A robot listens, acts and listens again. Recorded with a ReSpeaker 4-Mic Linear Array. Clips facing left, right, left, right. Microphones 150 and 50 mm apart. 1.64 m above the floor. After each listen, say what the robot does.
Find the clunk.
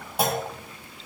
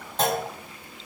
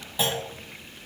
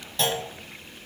Turn 30° left.
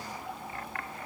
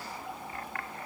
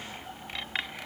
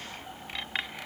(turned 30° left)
Keep listening.
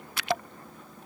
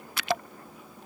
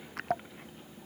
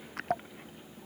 I heard a clunk, but can't make it out now. It was about 20° right or 140° left.